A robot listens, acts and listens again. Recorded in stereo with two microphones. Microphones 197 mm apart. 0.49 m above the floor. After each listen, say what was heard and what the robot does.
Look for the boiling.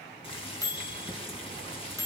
The boiling: about 30° left or 150° left. Turn 30° left.
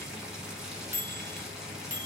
Facing the boiling, 1 to 2 m away.